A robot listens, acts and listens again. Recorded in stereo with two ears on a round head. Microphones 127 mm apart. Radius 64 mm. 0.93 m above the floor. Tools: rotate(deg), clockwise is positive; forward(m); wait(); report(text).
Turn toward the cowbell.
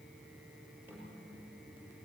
wait()
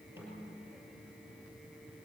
wait()
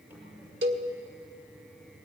rotate(90)
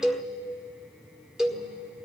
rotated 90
report("Found it: a cowbell, straight ahead.")